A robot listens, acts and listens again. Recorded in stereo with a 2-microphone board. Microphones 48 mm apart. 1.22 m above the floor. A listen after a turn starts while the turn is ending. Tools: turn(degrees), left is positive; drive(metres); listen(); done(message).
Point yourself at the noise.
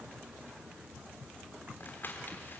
turn(degrees=45)
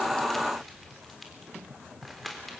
done("Found it: crumpling, straight ahead, 2 to 4 m away.")